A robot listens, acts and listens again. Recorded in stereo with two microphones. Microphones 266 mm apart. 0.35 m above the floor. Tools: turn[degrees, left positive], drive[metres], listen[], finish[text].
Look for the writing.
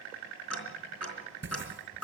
Thought: The writing: about 45° right or 135° right.
Action: turn[-45]
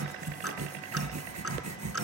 Thought: So it is at 90° right.
Action: turn[-90]
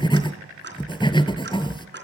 Thought: The writing is now 15° left.
Action: turn[15]
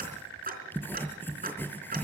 Action: finish[Facing the writing.]